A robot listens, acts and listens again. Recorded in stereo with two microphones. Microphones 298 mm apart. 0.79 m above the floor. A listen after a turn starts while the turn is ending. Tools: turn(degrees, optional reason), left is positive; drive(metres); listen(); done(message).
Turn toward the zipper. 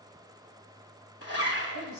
turn(degrees=50, reason="The zipper: about 50° left or 130° left.")
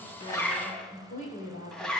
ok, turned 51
done("Found it: a zipper, straight ahead.")